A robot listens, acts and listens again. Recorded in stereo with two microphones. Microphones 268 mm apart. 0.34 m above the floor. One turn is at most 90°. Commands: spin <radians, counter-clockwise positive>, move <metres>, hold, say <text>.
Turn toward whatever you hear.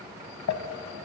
spin 1.57
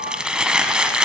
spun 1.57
say Found it: crumpling, straight ahead, under 1 m away.